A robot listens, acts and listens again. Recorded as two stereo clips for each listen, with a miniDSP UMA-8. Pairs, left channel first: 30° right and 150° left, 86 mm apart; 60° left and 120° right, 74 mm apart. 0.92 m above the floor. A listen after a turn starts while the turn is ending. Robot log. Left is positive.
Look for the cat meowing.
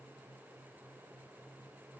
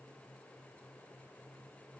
cmd idle
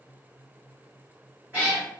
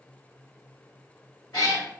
note: The cat meowing: 80° left.
cmd yaw +80
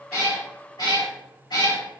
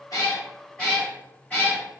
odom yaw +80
note: The cat meowing is now 15° right.
cmd yaw -15
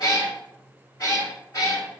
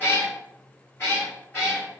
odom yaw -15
note: The cat meowing is now 10° left.
cmd yaw +10
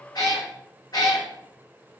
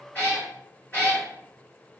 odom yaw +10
end: Facing the cat meowing.